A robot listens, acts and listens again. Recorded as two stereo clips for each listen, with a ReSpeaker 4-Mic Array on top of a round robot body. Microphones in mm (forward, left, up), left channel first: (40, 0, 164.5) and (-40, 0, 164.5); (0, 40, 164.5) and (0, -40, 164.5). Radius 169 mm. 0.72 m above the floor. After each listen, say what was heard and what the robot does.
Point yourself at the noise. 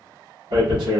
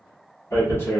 The tearing paper: 150° left. Turn 150° left.
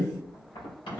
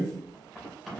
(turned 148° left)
Keep listening.
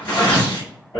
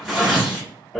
Facing the tearing paper, 1 to 2 m away.